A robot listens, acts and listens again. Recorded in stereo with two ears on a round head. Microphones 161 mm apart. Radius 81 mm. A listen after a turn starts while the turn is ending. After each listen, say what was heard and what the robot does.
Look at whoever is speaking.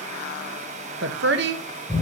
The woman speaking: about 65° right or 115° right. Turn 65° right.
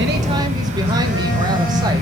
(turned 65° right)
Keep listening.
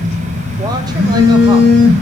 Keep listening.
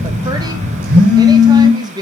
So it is at 25° right. Turn 25° right.
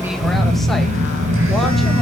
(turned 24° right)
Keep listening.
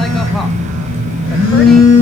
Keep listening.
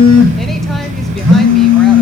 I heard a woman speaking from this way, but can't make it out now.